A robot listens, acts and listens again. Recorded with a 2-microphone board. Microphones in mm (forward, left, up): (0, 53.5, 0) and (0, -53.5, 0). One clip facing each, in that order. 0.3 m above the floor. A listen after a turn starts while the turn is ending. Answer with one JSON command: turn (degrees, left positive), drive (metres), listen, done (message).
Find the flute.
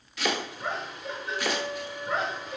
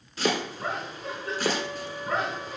{"turn": -70}
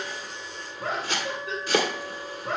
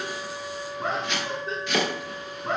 {"done": "Facing the flute."}